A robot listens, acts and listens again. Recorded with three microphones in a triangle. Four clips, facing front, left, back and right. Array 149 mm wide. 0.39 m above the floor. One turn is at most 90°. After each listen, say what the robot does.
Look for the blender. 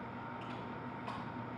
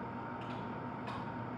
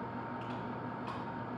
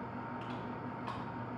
Keep listening.
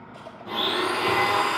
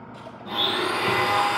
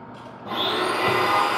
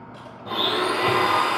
Turn 90° right.
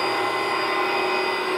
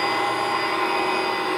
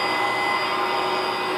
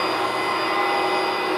Turn 90° right.
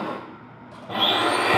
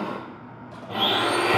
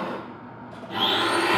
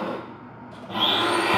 Facing the blender.